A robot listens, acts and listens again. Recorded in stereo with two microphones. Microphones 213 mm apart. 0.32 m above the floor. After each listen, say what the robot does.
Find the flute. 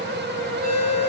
Keep listening.
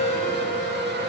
Keep listening.
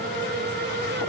I can't make out a flute to turn to.